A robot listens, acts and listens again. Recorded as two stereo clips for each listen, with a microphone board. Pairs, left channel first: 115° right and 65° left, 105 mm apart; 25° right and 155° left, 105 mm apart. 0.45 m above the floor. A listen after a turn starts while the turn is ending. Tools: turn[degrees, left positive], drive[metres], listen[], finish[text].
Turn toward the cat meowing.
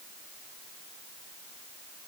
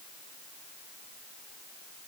Action: listen[]
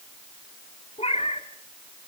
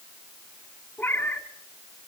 Thought: The cat meowing: 95° right.
Action: turn[-95]
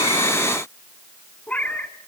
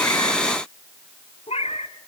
Thought: The cat meowing is now 35° right.
Action: turn[-35]
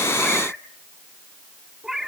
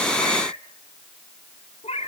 Thought: The cat meowing is now 20° right.
Action: turn[-20]
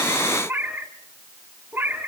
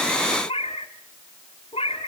Action: finish[Found it: a cat meowing, straight ahead, 1 to 2 m away.]